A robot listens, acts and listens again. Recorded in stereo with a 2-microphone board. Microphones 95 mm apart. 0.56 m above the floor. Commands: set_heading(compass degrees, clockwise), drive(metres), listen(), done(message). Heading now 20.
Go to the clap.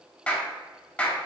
set_heading(5)
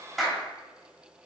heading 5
drive(1.0)
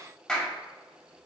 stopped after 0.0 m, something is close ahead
set_heading(355)
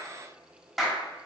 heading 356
done("Blocked. The clap is further on, straight ahead.")